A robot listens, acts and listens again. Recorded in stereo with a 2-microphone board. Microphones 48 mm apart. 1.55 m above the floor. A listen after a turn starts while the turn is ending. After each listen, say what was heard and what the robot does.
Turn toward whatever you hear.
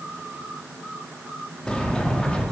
The sliding door: about 20° left or 160° left. Turn 20° left.
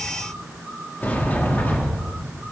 So it is at 140° left. Turn 140° left.
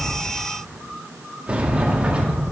The sliding door is now 30° right. Turn 30° right.
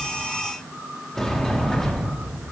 The sliding door is now 10° left. Turn 10° left.
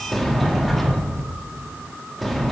Facing the sliding door.